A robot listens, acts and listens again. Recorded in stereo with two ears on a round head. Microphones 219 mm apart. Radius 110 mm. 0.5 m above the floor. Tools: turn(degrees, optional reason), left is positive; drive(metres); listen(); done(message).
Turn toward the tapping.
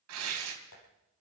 turn(degrees=90)
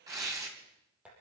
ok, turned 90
done("Facing the tapping, over 4 m away.")